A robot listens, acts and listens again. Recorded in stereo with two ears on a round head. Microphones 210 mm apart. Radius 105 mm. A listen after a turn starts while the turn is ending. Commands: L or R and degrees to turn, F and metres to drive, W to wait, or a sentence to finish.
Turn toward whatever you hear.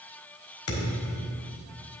L70
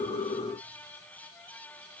W
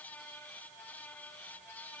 I heard a thud, but can't make it out now. It was about straight ahead or 40° left.